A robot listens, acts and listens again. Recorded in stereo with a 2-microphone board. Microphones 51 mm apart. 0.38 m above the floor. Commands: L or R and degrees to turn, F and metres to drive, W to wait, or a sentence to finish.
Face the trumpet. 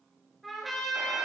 L30
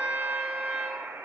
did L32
R30
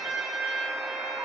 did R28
Facing the trumpet.